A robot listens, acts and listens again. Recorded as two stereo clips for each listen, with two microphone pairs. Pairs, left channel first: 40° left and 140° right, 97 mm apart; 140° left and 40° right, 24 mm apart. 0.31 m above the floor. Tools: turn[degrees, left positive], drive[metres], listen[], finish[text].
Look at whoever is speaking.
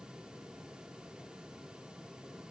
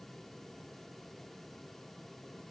Action: listen[]
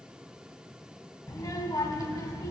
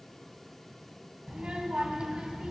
Action: finish[Facing the child speaking, 1 to 2 m away.]